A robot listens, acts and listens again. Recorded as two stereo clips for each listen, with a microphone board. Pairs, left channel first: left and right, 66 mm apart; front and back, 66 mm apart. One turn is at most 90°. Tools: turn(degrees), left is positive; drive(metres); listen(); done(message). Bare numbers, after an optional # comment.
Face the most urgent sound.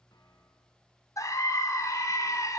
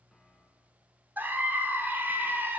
# The scream: 120° left.
turn(90)
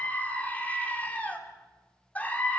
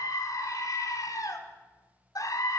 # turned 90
# The scream is now 20° left.
turn(20)
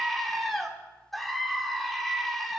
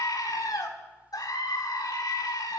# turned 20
done("Found it: a scream, straight ahead.")